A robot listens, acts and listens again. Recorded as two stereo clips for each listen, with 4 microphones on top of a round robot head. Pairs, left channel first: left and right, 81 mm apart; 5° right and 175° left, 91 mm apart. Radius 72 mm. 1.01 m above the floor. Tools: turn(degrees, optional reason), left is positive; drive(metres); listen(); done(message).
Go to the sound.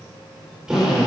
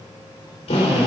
turn(degrees=-10, reason="The drill: 10° right.")
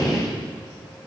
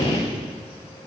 drive(metres=1.0)
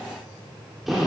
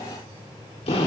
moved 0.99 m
drive(metres=1.0)
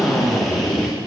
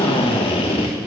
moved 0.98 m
drive(metres=1.0)
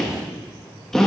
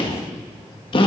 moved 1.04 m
drive(metres=1.0)
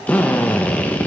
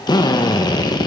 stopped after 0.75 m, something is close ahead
turn(degrees=20, reason="The drill is now 20° left.")
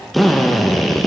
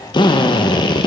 done("I am next to the drill.")